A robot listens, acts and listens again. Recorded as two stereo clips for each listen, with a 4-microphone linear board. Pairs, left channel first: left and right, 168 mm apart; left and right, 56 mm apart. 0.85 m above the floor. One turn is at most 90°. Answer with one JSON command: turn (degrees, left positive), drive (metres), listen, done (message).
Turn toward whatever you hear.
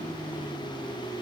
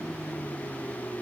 {"listen": true}
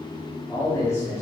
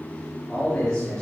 {"turn": 20}
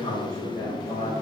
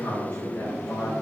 {"turn": 90}
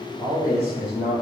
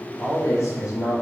{"turn": 75}
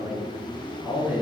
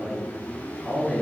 {"done": "Found it: a man speaking, straight ahead, over 4 m away."}